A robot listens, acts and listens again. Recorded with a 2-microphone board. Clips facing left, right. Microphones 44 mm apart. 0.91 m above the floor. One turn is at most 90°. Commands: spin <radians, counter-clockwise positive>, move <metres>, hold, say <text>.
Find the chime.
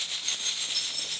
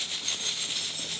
spin -0.70
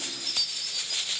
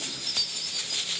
say Facing the chime.